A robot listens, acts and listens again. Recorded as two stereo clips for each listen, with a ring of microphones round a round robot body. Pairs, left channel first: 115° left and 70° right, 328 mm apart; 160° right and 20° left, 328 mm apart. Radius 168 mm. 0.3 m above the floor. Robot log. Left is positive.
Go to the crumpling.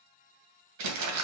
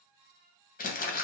note: The crumpling: 95° right.
cmd yaw -95
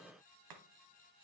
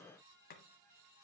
cmd idle
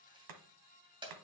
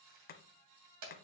cmd fwd 1.0
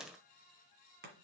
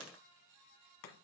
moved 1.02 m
cmd idle
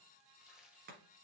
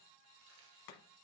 cmd idle
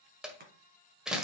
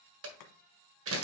note: The crumpling is now 20° left.
cmd yaw +20
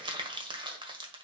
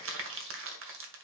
cmd fwd 1.0
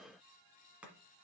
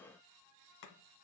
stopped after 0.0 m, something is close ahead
cmd idle
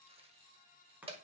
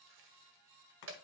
end: Arrived at the crumpling, straight ahead.